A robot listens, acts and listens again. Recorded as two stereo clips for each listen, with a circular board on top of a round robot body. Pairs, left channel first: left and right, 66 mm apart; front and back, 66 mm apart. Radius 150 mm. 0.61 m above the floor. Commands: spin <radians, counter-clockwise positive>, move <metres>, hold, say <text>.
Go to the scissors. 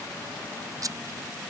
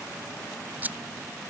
spin -2.09
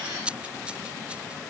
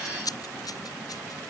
spin -0.26
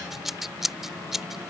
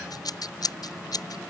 move 1.0
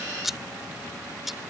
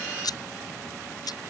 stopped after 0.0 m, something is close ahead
say Blocked. The scissors is further on, straight ahead.